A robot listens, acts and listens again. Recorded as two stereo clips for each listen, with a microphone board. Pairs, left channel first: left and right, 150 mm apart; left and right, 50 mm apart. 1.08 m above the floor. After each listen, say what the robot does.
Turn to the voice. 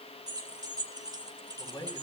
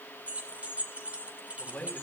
Turn 30° left.
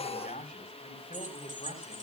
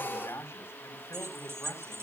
Turn 120° left.
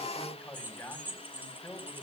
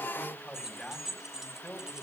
Turn 10° left.
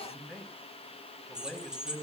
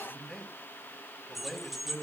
Facing the man speaking.